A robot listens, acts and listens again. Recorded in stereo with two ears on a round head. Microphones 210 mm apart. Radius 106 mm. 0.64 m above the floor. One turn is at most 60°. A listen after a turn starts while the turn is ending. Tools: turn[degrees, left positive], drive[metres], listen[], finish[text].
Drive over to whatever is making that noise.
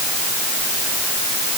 Action: listen[]
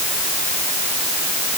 Action: listen[]
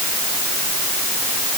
Action: finish[I can't make out anything.]